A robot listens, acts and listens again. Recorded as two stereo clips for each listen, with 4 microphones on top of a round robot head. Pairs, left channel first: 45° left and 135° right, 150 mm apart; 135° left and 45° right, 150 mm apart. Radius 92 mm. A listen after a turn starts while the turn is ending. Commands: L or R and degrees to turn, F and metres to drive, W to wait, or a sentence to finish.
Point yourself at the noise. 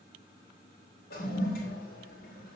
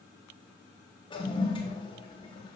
L75
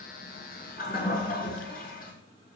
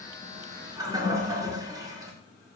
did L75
L20
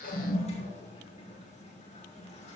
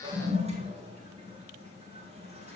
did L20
Facing the toilet flushing.